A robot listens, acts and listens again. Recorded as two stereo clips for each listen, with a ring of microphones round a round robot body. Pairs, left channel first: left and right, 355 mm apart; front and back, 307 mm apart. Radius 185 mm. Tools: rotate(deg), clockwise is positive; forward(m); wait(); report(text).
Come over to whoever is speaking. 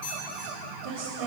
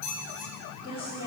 rotate(75)
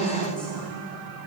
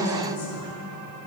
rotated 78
forward(1.0)
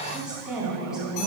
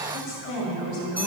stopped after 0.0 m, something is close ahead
report("Blocked. The woman speaking is further on, straight ahead.")